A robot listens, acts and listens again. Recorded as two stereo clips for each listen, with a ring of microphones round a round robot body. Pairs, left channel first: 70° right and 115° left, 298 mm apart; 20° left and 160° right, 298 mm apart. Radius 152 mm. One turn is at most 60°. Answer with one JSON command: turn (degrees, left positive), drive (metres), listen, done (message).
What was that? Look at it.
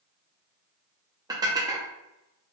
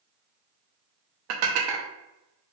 {"turn": -60}
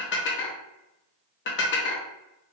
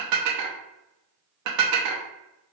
{"turn": -60}
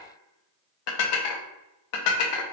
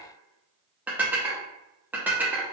{"turn": -60}
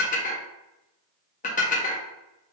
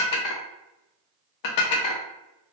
{"done": "Facing the dishes clattering."}